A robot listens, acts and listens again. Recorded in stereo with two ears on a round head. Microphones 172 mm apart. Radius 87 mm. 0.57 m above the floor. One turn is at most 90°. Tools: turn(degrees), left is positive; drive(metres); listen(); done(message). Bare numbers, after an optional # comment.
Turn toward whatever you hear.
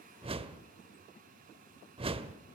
# The whoosh: about 30° right or 150° right.
turn(-30)
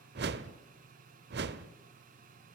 # So it is at 120° right.
turn(-90)
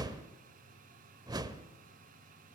# The whoosh is now 20° right.
turn(-20)
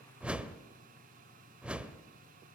done("Found it: a whoosh, straight ahead, under 1 m away.")